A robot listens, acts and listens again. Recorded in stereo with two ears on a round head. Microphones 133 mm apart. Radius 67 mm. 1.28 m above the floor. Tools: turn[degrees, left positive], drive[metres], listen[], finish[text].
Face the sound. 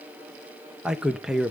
Action: turn[-30]
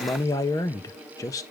Thought: So it is at 25° left.
Action: turn[25]
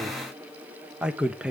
Action: finish[Found it: a man speaking, straight ahead, 1 to 2 m away.]